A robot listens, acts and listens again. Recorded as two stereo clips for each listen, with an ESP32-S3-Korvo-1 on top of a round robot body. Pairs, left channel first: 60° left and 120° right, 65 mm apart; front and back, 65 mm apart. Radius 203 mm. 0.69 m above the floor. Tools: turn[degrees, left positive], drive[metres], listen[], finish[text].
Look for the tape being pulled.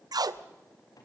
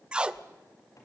Thought: The tape being pulled: 105° right.
Action: turn[-105]
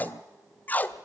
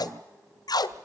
Action: finish[Found it: tape being pulled, straight ahead.]